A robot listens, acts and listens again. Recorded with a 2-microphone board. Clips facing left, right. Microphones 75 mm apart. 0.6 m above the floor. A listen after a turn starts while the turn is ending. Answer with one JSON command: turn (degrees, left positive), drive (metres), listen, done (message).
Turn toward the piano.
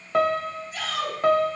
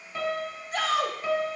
{"turn": 60}
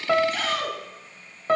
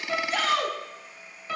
{"turn": 50}
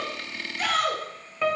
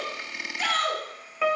{"done": "Facing the piano."}